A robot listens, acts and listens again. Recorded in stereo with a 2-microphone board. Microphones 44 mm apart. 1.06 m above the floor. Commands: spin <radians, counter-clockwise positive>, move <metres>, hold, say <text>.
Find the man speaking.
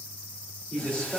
spin 0.35
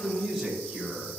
spin 0.52
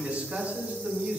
spin -0.44
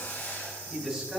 say Found it: a man speaking, straight ahead.